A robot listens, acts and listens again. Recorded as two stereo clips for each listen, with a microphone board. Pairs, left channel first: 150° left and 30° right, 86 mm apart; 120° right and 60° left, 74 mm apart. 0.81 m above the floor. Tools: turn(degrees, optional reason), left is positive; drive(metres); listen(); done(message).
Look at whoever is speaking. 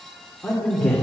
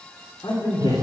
turn(degrees=-130, reason="The man speaking: 130° right.")
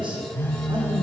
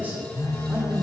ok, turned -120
turn(degrees=-10, reason="The man speaking is now 10° right.")
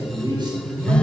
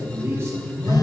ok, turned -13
done("Found it: a man speaking, straight ahead, 2 to 4 m away.")